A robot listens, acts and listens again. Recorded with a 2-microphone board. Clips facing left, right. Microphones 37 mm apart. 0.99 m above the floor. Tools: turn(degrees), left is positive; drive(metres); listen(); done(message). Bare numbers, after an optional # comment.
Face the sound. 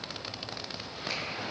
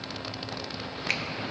# The finger snap: about 75° right or 105° right.
turn(-75)
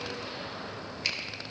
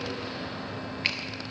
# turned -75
# So it is at 35° right.
turn(-35)
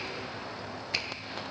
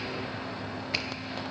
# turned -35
listen()
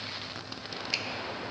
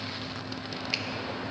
listen()
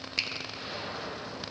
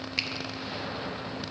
# The finger snap is now 10° right.
turn(-10)
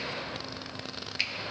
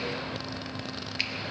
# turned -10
done("Found it: a finger snap, straight ahead.")